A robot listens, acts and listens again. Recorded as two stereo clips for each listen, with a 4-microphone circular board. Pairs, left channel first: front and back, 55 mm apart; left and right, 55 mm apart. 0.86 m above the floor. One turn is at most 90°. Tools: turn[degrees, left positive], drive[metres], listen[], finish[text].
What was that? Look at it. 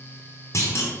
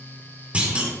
Thought: The clunk: 25° right.
Action: turn[-25]
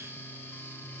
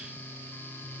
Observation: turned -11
Thought: Nothing new. It was at 15° right.
Action: turn[-15]
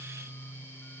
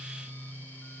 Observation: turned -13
Action: finish[I heard a clunk from this way, but can't make it out now.]